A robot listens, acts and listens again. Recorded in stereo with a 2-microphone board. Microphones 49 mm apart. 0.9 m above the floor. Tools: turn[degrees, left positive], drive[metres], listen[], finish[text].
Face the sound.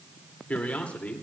Thought: The man speaking: about 35° left or 145° left.
Action: turn[35]
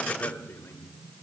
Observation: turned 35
Thought: So it is at 115° left.
Action: turn[115]
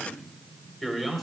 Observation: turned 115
Action: finish[Found it: a man speaking, straight ahead, 2 to 4 m away.]